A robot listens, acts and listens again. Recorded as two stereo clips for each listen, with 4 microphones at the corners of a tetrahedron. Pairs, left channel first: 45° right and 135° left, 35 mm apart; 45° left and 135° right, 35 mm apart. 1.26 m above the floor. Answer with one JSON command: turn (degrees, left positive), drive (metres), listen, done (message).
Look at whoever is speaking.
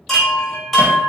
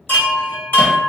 {"listen": true}
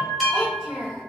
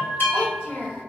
{"turn": 80}
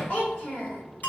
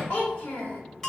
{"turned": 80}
{"turn": 10}
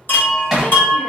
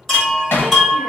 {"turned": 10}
{"listen": true}
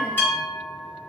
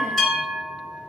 {"listen": true}
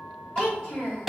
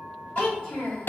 {"done": "Facing the child speaking, 1 to 2 m away."}